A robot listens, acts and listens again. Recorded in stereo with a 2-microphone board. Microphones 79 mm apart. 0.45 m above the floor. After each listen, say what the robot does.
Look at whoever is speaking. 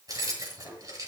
Keep listening.
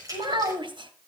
Turn 70° right.
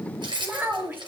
Turn 25° right.
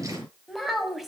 Found it: a child speaking, straight ahead, 2 to 4 m away.